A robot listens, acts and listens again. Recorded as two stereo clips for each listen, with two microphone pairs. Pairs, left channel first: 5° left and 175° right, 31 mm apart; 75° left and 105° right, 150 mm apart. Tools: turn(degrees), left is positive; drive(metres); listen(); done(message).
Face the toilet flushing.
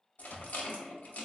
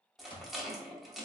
listen()
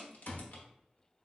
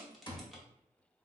listen()
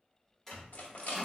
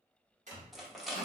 turn(degrees=-75)
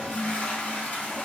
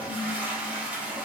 turn(degrees=-25)
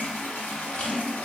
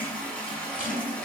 done("Facing the toilet flushing.")